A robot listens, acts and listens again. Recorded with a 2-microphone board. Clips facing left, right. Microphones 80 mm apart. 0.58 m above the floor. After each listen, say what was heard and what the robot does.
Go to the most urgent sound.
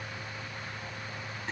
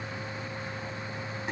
Keep listening.
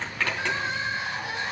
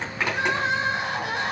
The crying: about 65° right or 115° right. Turn 65° right.
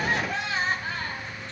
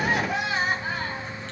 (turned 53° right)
So it is at 15° right. Turn 15° right.
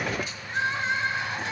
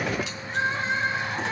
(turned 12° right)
Drive 1.0 m forward.
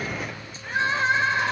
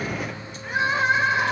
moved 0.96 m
The crying is now 10° right. Turn 10° right.
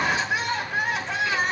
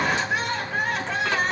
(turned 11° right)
Drive 1.0 m forward.
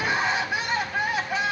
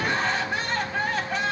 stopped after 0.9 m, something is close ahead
The crying is now 10° left. Turn 10° left.
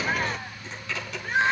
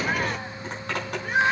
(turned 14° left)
Arrived at the crying, straight ahead.